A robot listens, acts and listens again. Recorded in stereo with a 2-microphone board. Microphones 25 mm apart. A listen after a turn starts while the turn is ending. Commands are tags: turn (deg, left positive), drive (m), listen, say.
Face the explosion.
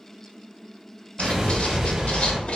<turn deg="-20"/>
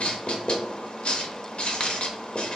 <listen/>
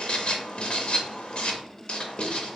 <say>I heard an explosion, but can't make it out now. It was about straight ahead or 140° right.</say>